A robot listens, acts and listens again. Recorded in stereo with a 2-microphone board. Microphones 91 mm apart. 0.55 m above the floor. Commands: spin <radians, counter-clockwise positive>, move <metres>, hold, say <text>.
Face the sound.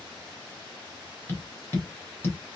spin 0.44
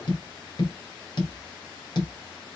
spin 2.18
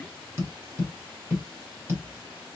spin -0.52
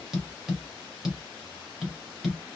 say Found it: tapping, straight ahead.